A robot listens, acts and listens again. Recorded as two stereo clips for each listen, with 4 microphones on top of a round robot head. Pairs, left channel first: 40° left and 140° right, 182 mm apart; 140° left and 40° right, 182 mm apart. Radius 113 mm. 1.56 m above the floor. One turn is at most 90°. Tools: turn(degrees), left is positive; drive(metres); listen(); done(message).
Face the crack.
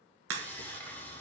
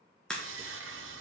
turn(degrees=-90)
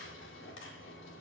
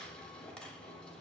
turn(degrees=-45)
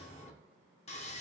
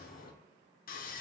done("I heard a crack from this way, but can't make it out now.")